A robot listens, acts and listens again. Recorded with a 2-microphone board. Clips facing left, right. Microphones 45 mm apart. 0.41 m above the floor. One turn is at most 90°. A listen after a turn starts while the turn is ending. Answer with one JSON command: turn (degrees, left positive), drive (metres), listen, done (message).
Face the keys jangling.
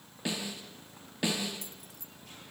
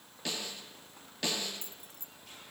{"turn": -35}
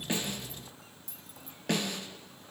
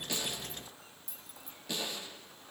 {"done": "Facing the keys jangling, 1 to 2 m away."}